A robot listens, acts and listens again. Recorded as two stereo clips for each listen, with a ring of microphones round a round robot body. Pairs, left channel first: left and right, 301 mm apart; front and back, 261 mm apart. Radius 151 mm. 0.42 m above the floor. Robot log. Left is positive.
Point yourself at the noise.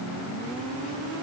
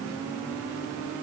cmd idle
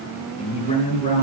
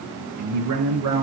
note: The man speaking: 155° left.
cmd yaw +155
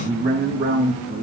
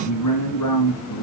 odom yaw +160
note: The man speaking is now 25° right.
cmd yaw -25
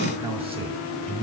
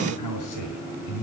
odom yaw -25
note: The man speaking is now 15° right.
cmd yaw -15
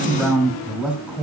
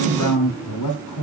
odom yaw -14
end: Found it: a man speaking, straight ahead, 2 to 4 m away.